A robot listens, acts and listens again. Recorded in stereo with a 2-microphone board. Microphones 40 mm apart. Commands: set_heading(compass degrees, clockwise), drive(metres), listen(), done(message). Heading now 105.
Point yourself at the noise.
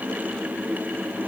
listen()
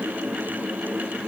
listen()
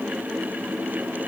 done("I can't make out anything to turn to.")